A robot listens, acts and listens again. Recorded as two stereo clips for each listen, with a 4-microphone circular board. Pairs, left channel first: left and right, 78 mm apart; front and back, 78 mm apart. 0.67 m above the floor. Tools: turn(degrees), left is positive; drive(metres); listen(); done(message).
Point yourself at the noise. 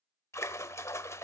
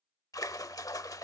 turn(degrees=40)
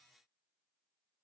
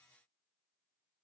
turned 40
done("I heard a splash from this way, but can't make it out now.")